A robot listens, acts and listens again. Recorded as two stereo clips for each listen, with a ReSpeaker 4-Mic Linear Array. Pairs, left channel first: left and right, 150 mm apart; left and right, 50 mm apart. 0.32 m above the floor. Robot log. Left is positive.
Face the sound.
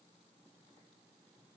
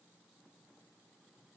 cmd idle
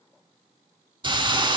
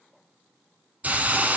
note: The hiss: about 35° right or 145° right.
cmd yaw -35
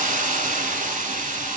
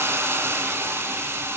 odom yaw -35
note: So it is at 110° right.
cmd yaw -110
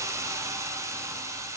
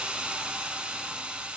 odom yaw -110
note: The hiss is now 20° right.
cmd yaw -20
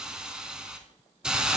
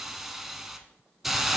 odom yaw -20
end: Found it: a hiss, straight ahead, under 1 m away.